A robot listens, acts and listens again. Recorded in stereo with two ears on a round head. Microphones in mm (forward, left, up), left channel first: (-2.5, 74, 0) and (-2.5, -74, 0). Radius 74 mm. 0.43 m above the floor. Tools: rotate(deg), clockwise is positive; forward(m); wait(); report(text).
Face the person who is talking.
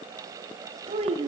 rotate(40)
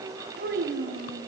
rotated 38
rotate(100)
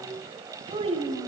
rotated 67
rotate(35)
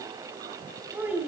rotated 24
rotate(10)
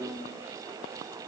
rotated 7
report("Facing the child speaking.")